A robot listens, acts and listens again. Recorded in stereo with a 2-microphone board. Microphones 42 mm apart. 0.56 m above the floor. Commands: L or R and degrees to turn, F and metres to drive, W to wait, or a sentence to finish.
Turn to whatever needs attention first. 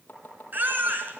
R45
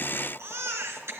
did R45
R90
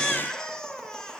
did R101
L10
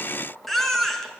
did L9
Found it: a baby crying, straight ahead.